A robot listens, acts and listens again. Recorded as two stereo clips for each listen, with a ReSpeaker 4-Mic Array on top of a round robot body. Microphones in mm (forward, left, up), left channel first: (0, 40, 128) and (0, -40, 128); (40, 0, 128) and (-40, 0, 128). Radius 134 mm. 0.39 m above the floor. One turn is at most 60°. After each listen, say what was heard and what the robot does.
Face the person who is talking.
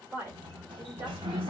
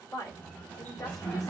The woman speaking: 30° right. Turn 30° right.
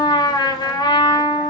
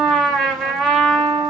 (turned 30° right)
Keep listening.
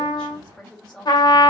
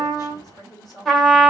The woman speaking is now 15° left. Turn 15° left.
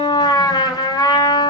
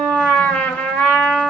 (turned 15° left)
Keep listening.
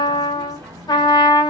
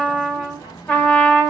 Keep listening.
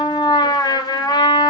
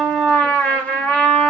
Facing where the woman speaking came from. I can't hear it now.